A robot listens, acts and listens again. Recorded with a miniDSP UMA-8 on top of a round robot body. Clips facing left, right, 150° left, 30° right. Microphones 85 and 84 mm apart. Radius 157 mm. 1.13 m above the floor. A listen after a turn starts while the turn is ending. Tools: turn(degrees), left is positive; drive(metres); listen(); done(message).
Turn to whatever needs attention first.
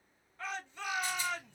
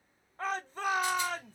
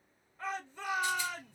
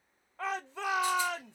turn(degrees=-40)
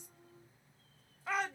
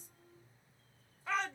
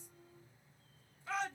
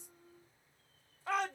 turn(degrees=10)
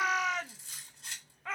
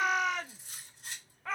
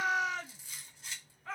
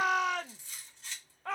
done("Facing the shout, under 1 m away.")